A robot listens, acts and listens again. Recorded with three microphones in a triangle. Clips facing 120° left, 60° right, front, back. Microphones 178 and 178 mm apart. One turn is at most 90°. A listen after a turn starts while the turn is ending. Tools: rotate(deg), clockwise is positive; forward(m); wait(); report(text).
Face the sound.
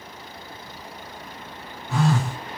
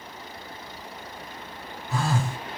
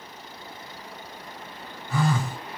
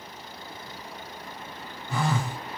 rotate(-90)
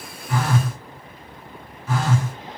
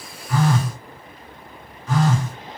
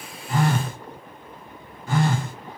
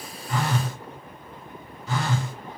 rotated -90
rotate(-40)
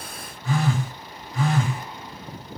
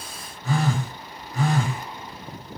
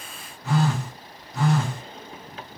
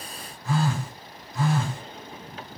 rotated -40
rotate(10)
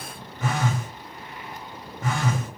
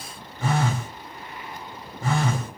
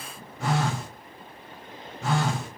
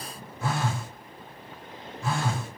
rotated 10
report("Facing the phone buzzing.")